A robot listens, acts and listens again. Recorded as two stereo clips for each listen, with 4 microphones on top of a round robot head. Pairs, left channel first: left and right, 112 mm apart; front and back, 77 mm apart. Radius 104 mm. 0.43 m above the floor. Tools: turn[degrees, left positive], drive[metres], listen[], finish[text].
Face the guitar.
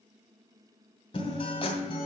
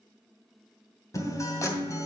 Thought: The guitar: 45° left.
Action: turn[45]
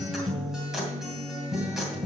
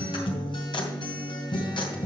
Action: finish[Facing the guitar, 2 to 4 m away.]